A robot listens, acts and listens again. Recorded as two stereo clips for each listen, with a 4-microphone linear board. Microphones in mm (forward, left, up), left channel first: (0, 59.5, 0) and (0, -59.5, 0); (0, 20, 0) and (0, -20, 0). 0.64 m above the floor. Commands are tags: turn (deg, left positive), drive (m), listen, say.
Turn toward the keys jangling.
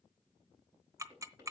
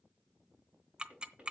<listen/>
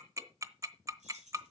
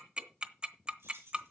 <turn deg="-90"/>
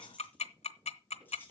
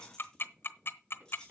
<turn deg="20"/>
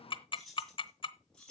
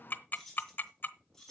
<say>Found it: keys jangling, straight ahead.</say>